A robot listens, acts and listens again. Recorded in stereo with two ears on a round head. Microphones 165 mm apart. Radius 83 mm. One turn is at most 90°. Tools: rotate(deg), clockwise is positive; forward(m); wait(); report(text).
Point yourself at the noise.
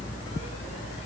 wait()
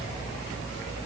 wait()
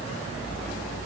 report("I can't make out anything.")